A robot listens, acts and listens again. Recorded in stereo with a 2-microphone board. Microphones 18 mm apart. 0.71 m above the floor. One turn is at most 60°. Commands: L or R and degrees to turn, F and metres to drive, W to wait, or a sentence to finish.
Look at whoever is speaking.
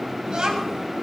R45
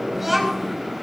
Found it: a child speaking, straight ahead, over 4 m away.